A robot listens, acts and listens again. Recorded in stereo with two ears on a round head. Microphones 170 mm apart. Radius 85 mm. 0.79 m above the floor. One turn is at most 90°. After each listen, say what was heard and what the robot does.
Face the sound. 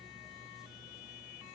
Keep listening.
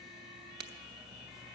The crack: about 60° right or 120° right. Turn 60° right.
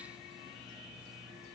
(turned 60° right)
Keep listening.
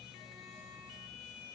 I heard a crack, but can't make it out now. It was about straight ahead or 60° right.